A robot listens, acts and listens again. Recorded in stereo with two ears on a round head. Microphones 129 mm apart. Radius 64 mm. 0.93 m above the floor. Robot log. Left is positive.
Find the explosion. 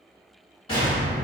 note: The explosion: about 35° left or 145° left.
cmd yaw +35
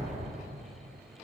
note: So it is at 105° left.
cmd yaw +105
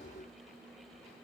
end: Facing where the explosion came from. I can't hear it now.